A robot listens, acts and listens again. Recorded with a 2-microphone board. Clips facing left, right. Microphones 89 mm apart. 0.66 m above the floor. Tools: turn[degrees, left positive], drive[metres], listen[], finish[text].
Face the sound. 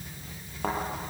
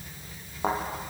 Action: turn[-30]
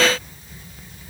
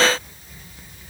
Action: listen[]
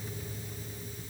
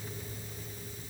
Action: finish[I heard a thud, but can't make it out now. It was about 15° left or 135° right.]